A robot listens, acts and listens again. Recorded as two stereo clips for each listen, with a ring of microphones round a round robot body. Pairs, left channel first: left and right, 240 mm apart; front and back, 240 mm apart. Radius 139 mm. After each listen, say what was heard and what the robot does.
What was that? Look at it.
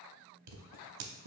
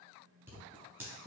The scissors: 95° right. Turn 95° right.
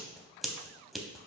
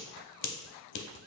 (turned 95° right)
Facing the scissors, under 1 m away.